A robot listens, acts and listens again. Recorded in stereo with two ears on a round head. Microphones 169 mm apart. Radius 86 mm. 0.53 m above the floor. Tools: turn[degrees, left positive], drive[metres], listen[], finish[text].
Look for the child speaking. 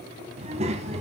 Thought: The child speaking: about 40° right or 140° right.
Action: turn[-40]
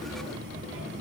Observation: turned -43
Thought: So it is at 100° right.
Action: turn[-100]
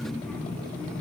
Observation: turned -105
Action: finish[Found it: a child speaking, straight ahead.]